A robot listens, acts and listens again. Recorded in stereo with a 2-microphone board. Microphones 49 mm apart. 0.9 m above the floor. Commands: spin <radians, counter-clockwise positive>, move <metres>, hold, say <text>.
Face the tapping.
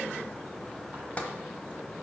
spin 0.52
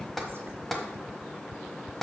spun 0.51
say Found it: tapping, straight ahead, 1 to 2 m away.